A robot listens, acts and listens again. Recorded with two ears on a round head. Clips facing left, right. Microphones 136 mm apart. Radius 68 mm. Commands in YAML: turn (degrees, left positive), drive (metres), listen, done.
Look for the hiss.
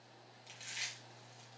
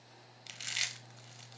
listen: true
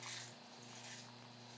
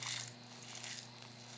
listen: true
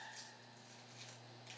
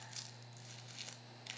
done: "I can't make out a hiss to turn to."